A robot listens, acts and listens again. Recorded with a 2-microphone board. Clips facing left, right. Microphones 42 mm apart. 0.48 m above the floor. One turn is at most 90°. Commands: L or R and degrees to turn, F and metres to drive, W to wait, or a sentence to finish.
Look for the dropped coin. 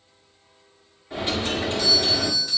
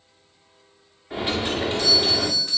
R20
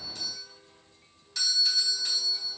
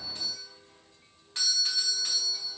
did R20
W
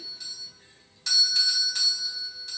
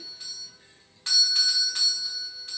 I heard a dropped coin, but can't make it out now. It was about straight ahead or 140° right.